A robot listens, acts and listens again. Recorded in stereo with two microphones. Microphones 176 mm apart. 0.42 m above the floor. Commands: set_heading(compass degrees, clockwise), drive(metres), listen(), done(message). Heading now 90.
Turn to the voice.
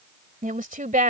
set_heading(140)
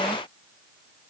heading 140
listen()
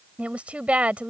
set_heading(150)
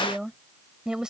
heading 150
done("Facing the woman speaking.")